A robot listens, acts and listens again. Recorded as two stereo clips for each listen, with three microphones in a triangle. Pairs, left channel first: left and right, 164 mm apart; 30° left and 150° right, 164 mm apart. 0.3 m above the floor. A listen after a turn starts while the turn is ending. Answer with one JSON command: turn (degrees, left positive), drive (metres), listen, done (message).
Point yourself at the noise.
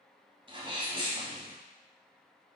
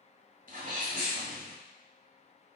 {"turn": -140}
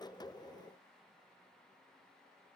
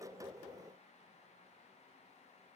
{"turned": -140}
{"done": "Facing where the sneeze came from. I can't hear it now."}